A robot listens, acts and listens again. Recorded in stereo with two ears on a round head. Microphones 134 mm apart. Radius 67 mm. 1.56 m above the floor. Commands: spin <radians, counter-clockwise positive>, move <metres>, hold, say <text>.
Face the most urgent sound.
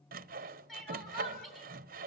spin 0.52
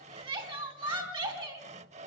spin -0.52
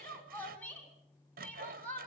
spin 0.17
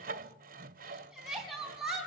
say Found it: crying, straight ahead, 2 to 4 m away.